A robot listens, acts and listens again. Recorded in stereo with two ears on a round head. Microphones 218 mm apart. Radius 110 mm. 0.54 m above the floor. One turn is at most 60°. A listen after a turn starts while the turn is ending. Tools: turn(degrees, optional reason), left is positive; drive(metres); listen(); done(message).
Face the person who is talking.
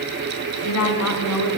turn(degrees=60)
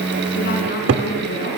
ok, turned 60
turn(degrees=35, reason="So it is at 35° left.")
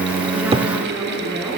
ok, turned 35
listen()
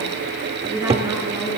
turn(degrees=-10, reason="The woman speaking is now 10° right.")
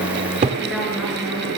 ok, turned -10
listen()
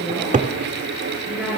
done("Found it: a woman speaking, straight ahead, over 4 m away.")